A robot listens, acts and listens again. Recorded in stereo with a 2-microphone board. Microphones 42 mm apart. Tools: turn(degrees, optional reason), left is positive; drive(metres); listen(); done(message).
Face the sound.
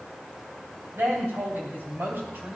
turn(degrees=-70, reason="The woman speaking: about 70° right or 110° right.")
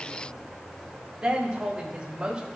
turn(degrees=-25, reason="So it is at 25° right.")
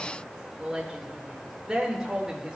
turn(degrees=-15, reason="The woman speaking is now 15° right.")
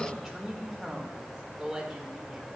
done("Found it: a woman speaking, straight ahead, 1 to 2 m away.")